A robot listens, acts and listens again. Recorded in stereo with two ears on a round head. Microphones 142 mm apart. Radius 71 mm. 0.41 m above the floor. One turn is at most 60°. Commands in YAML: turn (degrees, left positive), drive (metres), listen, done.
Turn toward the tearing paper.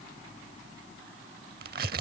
turn: -60
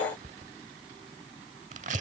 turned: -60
turn: -50
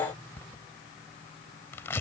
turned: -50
turn: 15
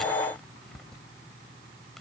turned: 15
done: "Found it: tearing paper, straight ahead."